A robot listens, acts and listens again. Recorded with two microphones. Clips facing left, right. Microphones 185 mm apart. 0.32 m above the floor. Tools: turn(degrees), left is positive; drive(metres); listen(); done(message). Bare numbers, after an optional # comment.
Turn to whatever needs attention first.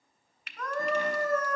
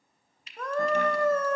# The scream: about 25° right or 155° right.
turn(-25)
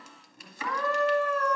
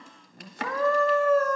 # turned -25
# So it is at 125° right.
turn(-125)
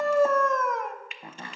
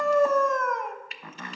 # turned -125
done("Found it: a scream, straight ahead, 1 to 2 m away.")